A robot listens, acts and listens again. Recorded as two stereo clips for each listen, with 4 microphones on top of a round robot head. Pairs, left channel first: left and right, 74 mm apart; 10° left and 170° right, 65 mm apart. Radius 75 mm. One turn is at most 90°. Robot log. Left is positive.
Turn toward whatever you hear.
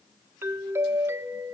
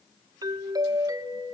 note: The doorbell: 150° right.
cmd yaw -90
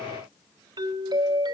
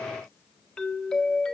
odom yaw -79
note: The doorbell is now 70° right.
cmd yaw -70
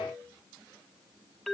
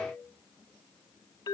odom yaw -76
end: Facing the doorbell, 1 to 2 m away.